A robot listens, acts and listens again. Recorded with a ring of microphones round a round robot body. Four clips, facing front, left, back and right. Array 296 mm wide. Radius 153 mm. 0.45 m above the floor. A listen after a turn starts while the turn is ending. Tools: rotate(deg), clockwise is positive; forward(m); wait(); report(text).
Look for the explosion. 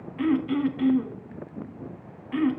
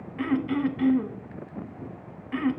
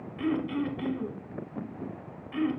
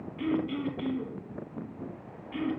wait()
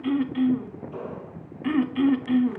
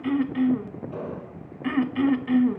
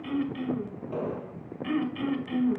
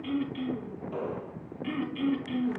rotate(155)
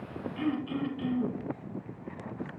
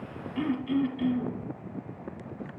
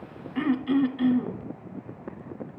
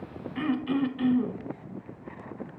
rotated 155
report("Facing where the explosion came from. I can't hear it now.")